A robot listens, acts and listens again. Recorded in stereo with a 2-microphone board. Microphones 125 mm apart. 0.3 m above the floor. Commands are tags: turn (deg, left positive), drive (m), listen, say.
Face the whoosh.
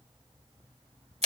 <listen/>
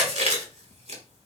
<listen/>
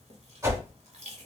<turn deg="-30"/>
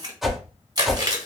<say>Facing the whoosh, 2 to 4 m away.</say>